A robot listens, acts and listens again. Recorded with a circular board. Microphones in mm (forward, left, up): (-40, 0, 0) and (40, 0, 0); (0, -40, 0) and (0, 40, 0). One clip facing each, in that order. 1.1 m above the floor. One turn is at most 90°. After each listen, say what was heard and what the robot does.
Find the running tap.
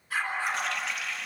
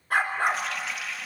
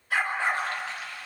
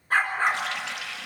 The running tap: 90° left. Turn 90° left.
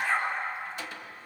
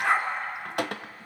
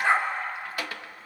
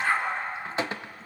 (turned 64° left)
The running tap is now 25° left. Turn 25° left.
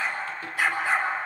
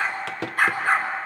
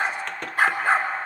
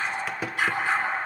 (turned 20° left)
Found it: a running tap, straight ahead, under 1 m away.